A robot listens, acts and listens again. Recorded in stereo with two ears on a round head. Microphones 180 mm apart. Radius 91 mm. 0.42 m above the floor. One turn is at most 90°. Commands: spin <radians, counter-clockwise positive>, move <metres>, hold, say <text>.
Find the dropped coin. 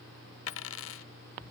spin 1.31
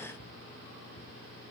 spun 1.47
hold
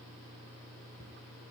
say I heard a dropped coin, but can't make it out now. It was about 10° right or 20° left.